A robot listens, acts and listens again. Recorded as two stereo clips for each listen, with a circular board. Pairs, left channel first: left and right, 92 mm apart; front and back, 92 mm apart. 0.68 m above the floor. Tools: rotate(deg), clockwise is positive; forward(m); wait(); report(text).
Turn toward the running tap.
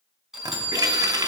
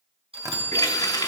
rotate(45)
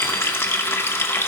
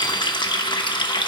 rotate(-30)
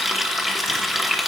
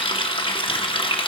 report("Found it: a running tap, straight ahead, under 1 m away.")